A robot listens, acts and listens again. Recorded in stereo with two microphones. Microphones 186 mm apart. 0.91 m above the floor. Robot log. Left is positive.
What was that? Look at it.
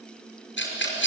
cmd yaw +90
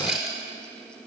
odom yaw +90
end: Facing the rattle, over 4 m away.